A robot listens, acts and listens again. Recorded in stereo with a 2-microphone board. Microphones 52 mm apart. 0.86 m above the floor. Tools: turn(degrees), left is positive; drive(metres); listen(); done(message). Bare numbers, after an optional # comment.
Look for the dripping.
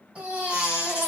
listen()
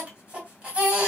listen()
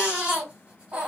done("I can't make out dripping to turn to.")